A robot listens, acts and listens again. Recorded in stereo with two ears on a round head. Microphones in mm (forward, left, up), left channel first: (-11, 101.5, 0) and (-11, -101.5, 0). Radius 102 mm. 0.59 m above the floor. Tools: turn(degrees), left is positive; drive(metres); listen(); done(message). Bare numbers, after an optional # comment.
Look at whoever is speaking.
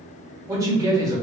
# The man speaking: about 15° right or 165° right.
turn(-15)
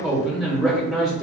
done("Facing the man speaking.")